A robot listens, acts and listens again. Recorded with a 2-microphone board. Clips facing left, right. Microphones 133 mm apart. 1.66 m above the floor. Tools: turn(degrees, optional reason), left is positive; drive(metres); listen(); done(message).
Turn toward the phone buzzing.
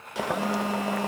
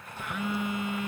turn(degrees=35, reason="The phone buzzing: about 35° left or 145° left.")
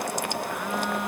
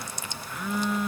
done("Facing the phone buzzing.")